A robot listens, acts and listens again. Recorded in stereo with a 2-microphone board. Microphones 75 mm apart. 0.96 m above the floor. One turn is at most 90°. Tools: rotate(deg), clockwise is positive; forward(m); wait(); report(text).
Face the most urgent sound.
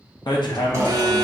rotate(70)
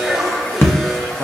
report("Facing the alarm, under 1 m away.")